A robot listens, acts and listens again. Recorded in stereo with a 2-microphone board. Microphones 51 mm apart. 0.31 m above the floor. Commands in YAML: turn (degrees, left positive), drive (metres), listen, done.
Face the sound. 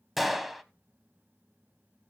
turn: 30
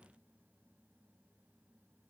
listen: true
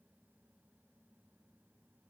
done: "I heard a gunshot, but can't make it out now. It was about 30° right or 150° left."